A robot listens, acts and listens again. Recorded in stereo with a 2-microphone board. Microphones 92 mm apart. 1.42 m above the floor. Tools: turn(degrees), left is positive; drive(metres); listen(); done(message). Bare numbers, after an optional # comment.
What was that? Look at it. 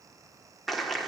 turn(30)
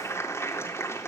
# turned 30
# So it is at 150° left.
turn(150)
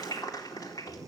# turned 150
# The clap is now 50° left.
turn(50)
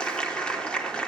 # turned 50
# The clap is now 10° left.
turn(10)
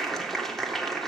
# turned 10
done("Facing the clap.")